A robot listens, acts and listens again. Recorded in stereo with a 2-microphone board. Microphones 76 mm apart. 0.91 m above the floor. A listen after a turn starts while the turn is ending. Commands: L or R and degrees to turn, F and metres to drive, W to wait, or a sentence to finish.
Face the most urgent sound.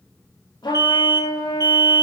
R55
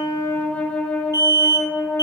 R60
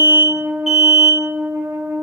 Facing the alarm.